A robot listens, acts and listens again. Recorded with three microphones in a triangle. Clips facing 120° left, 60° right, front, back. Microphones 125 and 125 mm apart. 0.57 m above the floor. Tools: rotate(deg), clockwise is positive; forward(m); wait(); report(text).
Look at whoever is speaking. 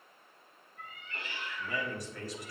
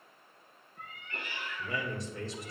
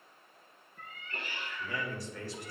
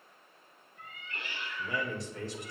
rotate(115)
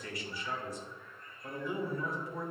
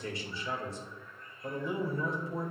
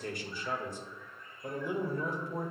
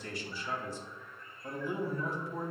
report("Facing the man speaking, 1 to 2 m away.")